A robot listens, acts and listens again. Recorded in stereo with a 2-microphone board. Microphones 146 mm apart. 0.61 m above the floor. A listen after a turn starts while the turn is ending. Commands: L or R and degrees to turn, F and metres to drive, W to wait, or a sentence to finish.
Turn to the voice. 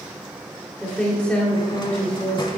L30
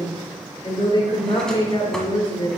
L135
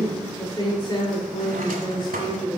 L30
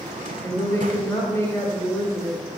L15
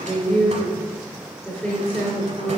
Found it: a woman speaking, straight ahead.